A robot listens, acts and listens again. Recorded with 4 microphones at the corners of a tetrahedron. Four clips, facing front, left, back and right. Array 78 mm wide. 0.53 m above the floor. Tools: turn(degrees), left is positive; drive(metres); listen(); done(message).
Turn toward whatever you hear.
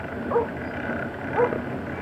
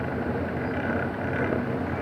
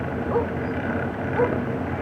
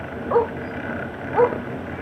turn(degrees=-80)
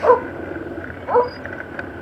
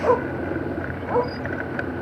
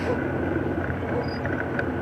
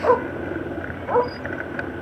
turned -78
turn(degrees=-15)
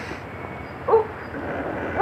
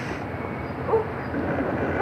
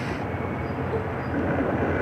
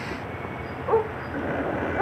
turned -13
turn(degrees=-10)
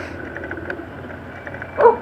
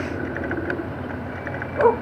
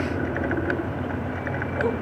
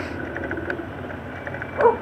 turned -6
done("Found it: a dog barking, straight ahead.")